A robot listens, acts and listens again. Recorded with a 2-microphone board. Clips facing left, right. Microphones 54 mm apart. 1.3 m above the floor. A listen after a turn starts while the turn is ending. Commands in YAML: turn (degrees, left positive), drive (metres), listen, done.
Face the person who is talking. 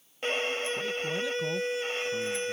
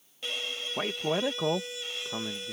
turn: -70
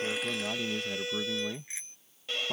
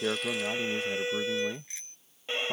done: "Found it: a man speaking, straight ahead."